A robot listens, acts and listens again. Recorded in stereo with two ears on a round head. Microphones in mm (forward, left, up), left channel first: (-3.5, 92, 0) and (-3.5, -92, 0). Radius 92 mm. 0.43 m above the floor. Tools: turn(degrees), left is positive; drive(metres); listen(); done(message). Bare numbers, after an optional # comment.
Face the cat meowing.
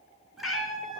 turn(30)
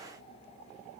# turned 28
listen()
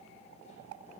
listen()
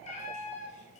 # So it is at 140° left.
turn(140)
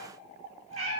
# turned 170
# The cat meowing is now 35° right.
turn(-35)
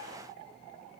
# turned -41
listen()
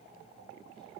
listen()
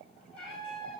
done("Facing the cat meowing.")